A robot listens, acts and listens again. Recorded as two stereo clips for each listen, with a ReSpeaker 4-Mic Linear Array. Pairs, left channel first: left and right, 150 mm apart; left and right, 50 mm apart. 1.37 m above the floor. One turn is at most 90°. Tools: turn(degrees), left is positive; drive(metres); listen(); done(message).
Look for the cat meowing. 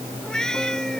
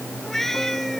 turn(degrees=30)
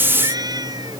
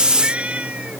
turn(degrees=-25)
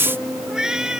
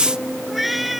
done("Found it: a cat meowing, straight ahead.")